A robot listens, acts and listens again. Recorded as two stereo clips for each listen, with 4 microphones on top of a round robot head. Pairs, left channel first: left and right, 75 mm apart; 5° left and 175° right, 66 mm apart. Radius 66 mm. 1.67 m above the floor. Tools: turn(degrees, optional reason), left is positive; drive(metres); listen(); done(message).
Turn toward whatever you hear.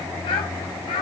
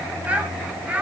turn(degrees=110, reason="The child speaking: 110° left.")
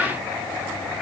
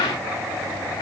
listen()
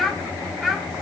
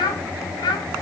done("Found it: a child speaking, straight ahead.")